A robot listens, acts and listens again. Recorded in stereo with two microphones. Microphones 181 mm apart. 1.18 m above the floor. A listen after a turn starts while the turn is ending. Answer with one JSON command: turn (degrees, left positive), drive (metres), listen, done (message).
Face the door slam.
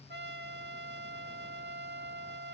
{"listen": true}
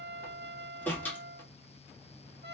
{"turn": 30}
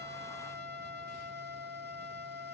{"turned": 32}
{"listen": true}
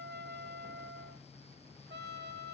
{"done": "I heard a door slam, but can't make it out now. It was about 20° right or 140° left."}